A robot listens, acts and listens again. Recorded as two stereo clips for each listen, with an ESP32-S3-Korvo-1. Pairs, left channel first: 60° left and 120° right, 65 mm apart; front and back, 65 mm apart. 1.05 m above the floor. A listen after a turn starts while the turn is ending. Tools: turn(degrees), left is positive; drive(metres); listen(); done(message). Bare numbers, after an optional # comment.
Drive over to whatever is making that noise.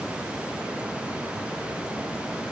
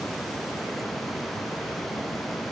listen()
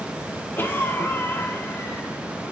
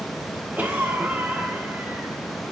# The cough: 115° left.
turn(115)
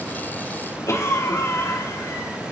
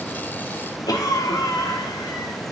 # The cough is now 15° left.
turn(15)
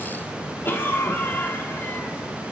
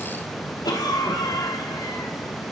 drive(1.0)
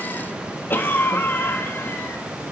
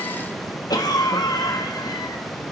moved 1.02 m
drive(1.0)
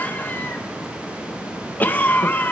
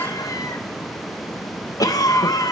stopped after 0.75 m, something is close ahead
done("Arrived at the cough, straight ahead.")